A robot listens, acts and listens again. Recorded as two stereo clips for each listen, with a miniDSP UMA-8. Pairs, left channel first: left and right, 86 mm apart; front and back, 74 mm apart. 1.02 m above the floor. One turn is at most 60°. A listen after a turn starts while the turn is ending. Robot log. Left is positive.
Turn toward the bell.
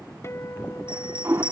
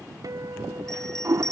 note: The bell: 85° right.
cmd yaw -60
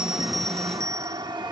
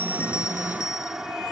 note: The bell is now 40° right.
cmd yaw -40
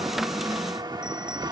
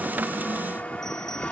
cmd idle
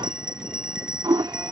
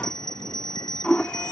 note: The bell is now 10° right.
cmd yaw -10
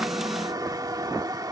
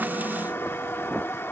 cmd idle
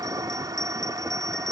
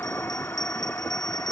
cmd idle
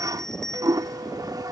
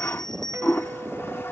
end: Facing the bell.